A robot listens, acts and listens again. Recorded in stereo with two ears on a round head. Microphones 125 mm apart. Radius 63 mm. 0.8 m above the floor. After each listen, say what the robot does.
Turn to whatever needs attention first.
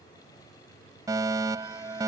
Turn 25° right.
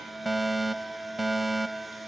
Facing the fire alarm.